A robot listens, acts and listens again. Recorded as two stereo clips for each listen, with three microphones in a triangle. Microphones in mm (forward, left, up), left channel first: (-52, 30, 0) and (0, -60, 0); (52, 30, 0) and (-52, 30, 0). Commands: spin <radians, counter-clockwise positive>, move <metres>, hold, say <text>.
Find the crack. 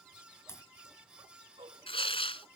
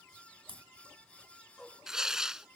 spin 3.14
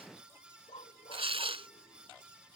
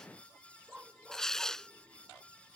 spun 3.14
say I heard a crack from this way, but can't make it out now.